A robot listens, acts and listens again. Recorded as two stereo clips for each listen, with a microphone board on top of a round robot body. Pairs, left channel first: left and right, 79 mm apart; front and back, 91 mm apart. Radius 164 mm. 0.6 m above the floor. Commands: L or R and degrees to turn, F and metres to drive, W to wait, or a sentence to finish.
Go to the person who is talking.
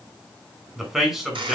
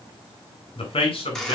F1.0
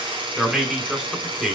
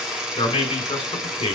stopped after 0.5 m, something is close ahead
Something is in my way. I am facing the man speaking but have not reached it.